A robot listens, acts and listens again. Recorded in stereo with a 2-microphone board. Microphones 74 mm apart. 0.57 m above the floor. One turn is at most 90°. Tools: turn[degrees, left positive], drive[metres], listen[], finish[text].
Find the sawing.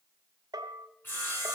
Thought: The sawing: about 30° left or 150° left.
Action: turn[30]
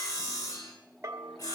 Thought: So it is at 120° left.
Action: turn[90]
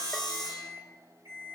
Thought: The sawing is now 70° left.
Action: turn[70]
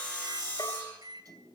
Thought: The sawing is now 20° left.
Action: turn[20]
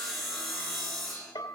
Action: finish[Facing the sawing.]